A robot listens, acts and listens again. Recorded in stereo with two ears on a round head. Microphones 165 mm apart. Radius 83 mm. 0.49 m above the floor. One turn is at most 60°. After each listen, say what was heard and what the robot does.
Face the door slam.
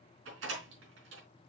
Turn 60° right.
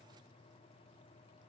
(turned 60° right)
Nothing new. It was at 30° right. Turn 30° right.
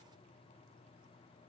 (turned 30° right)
Facing where the door slam came from. I can't hear it now.